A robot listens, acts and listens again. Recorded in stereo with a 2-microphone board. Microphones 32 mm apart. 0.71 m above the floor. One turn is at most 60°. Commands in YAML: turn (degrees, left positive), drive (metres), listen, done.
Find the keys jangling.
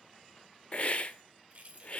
turn: -50
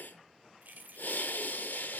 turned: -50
turn: -60
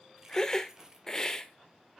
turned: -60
turn: -20
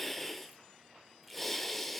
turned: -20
listen: true
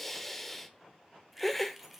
done: "Found it: keys jangling, straight ahead."